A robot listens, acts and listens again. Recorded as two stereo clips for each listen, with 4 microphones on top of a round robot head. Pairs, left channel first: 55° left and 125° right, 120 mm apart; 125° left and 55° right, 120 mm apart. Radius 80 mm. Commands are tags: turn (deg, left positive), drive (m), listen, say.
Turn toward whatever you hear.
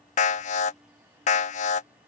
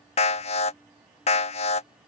<turn deg="85"/>
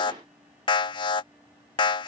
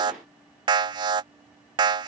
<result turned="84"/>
<say>Facing the alarm.</say>